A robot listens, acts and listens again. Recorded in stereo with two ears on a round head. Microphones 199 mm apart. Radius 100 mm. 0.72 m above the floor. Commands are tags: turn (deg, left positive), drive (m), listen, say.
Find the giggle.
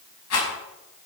<listen/>
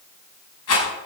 <listen/>
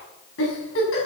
<turn deg="65"/>
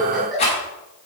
<say>Found it: a giggle, straight ahead.</say>